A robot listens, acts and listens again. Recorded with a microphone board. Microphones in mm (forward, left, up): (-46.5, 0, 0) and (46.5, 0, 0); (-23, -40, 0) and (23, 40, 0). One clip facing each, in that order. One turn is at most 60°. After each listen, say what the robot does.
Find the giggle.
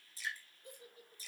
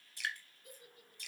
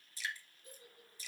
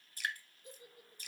Turn 60° left.
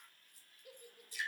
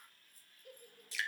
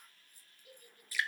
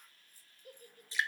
Turn 60° left.
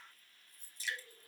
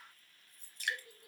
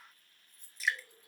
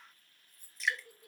Turn 60° left.
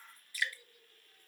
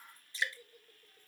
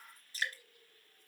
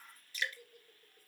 Turn 35° left.
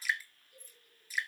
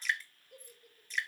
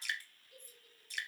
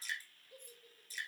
Found it: a giggle, straight ahead.